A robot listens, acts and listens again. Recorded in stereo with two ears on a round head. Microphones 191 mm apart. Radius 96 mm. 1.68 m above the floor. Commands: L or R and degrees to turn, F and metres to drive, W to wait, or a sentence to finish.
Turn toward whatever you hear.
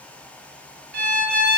R50
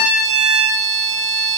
R80
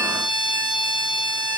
Facing the violin.